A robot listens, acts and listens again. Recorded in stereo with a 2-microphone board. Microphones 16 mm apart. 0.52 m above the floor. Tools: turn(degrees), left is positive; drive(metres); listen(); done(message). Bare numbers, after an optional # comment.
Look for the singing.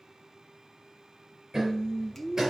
# The singing: about 45° left or 135° left.
turn(45)
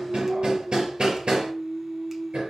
done("Found it: singing, straight ahead.")